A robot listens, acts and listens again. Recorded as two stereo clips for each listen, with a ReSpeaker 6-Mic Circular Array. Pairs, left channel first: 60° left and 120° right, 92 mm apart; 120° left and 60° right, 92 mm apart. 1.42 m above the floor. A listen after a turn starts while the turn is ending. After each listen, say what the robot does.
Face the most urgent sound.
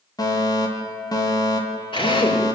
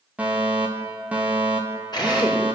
Turn 15° left.
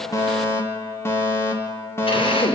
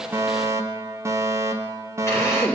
Facing the fire alarm.